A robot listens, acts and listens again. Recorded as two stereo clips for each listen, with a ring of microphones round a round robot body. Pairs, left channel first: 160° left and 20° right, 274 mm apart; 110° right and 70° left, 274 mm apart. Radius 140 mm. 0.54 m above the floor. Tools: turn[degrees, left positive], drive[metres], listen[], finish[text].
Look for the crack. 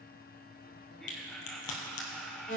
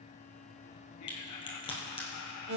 Thought: The crack: 175° left.
Action: turn[175]
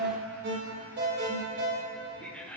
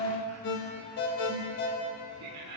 Action: finish[I heard a crack from this way, but can't make it out now.]